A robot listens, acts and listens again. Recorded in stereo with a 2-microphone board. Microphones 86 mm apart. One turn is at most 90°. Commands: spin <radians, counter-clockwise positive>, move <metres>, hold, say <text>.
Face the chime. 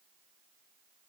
hold
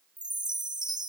spin -0.96
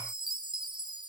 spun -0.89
spin -1.31
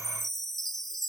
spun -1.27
say Found it: a chime, straight ahead, 1 to 2 m away.